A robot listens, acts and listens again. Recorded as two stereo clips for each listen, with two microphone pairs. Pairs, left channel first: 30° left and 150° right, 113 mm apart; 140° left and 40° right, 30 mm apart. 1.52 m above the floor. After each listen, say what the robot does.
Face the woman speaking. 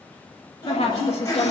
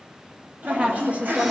Facing the woman speaking, 2 to 4 m away.